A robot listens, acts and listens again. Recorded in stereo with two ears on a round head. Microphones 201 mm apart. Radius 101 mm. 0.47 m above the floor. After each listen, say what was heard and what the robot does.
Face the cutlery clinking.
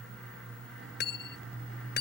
The cutlery clinking: about 45° left or 135° left. Turn 45° left.
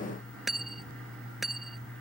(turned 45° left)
Facing the cutlery clinking.